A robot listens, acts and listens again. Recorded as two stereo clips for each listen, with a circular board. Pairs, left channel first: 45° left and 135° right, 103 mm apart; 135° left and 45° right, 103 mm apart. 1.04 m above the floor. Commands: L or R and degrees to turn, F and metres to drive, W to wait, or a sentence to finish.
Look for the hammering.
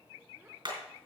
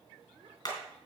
R175
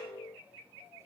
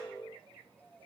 W
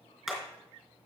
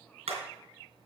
R45
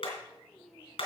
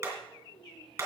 L20
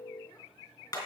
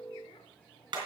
Found it: hammering, straight ahead, 2 to 4 m away.